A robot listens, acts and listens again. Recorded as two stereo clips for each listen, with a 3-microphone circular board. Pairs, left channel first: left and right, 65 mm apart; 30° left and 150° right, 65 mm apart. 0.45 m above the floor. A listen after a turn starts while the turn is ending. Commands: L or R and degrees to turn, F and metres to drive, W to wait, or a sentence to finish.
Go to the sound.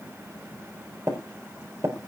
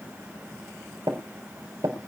R130
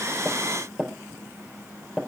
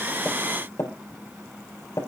R15
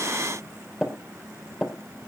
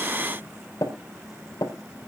F1.0
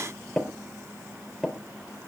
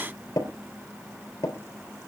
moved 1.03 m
F1.0
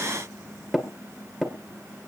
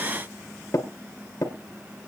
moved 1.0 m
F1.0
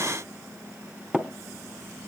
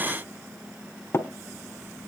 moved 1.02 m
R10
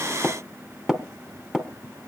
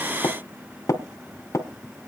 F1.0
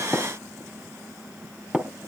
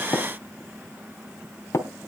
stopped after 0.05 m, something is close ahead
R10
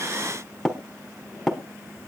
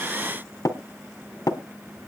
Arrived at the tapping, straight ahead.